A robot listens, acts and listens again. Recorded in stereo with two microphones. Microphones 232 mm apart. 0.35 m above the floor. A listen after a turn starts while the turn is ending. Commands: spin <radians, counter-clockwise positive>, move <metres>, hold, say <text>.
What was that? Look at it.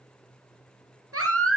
spin -1.57
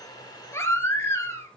spin 0.17
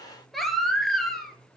say Found it: a baby crying, straight ahead.